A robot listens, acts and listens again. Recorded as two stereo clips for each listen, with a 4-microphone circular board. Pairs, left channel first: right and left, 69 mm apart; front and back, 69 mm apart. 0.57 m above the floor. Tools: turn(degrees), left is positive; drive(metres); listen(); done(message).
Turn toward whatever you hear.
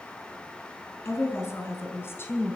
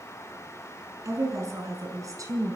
turn(degrees=-145)
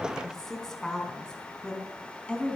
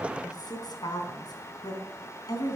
turn(degrees=-20)
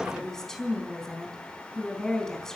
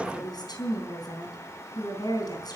turn(degrees=-10)
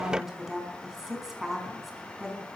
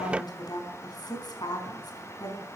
done("Found it: a woman speaking, straight ahead, over 4 m away.")